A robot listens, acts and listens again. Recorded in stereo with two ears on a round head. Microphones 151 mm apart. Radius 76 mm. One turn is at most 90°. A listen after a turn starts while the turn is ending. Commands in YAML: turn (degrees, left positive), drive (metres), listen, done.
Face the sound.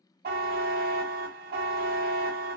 turn: -55
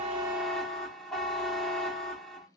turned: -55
done: "Facing the buzzer."